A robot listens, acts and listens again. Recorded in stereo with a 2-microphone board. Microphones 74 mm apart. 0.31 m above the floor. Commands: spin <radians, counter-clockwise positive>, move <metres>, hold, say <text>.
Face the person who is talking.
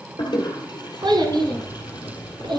spin -1.57
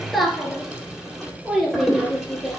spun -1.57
say Found it: a child speaking, straight ahead.